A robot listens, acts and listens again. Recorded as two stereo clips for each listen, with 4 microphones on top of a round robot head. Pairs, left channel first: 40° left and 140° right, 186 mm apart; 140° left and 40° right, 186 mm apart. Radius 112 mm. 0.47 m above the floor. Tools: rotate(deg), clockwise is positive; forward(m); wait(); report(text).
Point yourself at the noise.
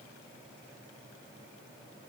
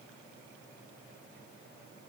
wait()
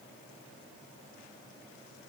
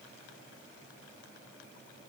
wait()
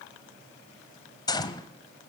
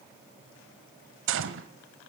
rotate(30)
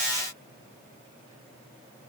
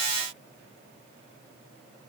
report("Facing where the gunshot came from. I can't hear it now.")